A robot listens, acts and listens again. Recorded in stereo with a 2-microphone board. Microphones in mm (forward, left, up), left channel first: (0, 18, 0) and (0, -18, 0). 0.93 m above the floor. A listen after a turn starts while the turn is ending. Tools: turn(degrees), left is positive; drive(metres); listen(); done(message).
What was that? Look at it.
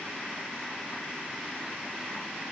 listen()
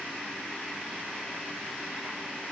listen()
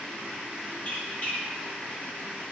turn(degrees=40)
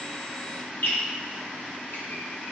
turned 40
turn(degrees=90)
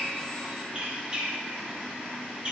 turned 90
turn(degrees=-30)
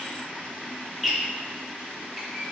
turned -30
done("Found it: a squeak, straight ahead, under 1 m away.")